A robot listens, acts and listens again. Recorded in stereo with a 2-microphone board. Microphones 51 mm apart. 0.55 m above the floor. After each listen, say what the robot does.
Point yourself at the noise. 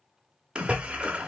Turn 20° right.
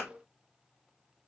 Keep listening.
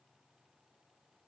I heard a splash, but can't make it out now. It was about straight ahead or 140° right.